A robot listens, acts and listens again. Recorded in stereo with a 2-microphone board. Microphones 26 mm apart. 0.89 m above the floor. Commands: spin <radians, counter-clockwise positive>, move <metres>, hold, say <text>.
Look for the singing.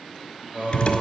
spin -1.31
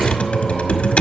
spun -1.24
hold
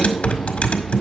hold
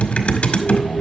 say I heard singing, but can't make it out now. It was about straight ahead or 35° right.